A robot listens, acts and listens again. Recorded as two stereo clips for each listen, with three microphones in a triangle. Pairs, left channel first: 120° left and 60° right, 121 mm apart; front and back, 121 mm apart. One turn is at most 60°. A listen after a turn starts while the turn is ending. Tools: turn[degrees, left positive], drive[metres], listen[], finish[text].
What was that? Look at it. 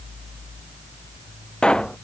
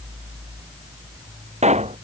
Thought: The pop: 160° right.
Action: turn[-60]
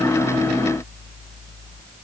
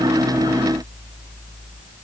Thought: Nothing new. It was at 100° right.
Action: turn[-60]
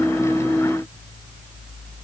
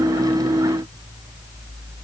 Thought: Nothing new. It was at 40° right.
Action: turn[-40]
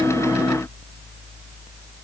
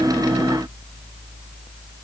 Action: finish[I heard a pop from this way, but can't make it out now.]